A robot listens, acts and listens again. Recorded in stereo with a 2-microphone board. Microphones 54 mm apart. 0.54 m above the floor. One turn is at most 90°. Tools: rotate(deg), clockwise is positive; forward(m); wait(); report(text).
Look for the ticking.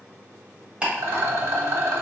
rotate(25)
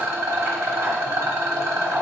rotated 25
wait()
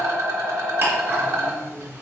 wait()
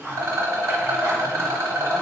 rotate(90)
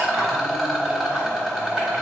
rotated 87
rotate(45)
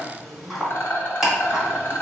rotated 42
report("Found it: ticking, straight ahead.")